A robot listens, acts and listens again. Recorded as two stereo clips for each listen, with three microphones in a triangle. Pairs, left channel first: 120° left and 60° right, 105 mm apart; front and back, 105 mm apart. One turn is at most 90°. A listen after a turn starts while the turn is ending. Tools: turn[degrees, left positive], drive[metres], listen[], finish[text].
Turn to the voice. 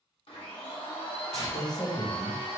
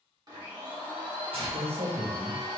Thought: The man speaking: 170° left.
Action: turn[90]
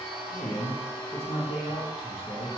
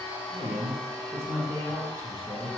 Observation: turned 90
Thought: The man speaking is now 120° left.
Action: turn[90]
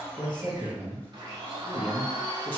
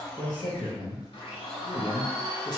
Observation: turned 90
Thought: The man speaking is now 15° left.
Action: turn[15]
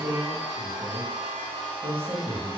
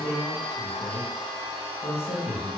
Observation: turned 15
Action: finish[Facing the man speaking.]